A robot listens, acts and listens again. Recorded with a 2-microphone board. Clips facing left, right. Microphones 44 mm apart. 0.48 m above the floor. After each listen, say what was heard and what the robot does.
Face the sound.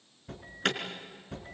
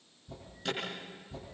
The alarm: about 60° left or 120° left. Turn 60° left.
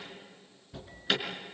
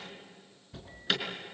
Facing the alarm.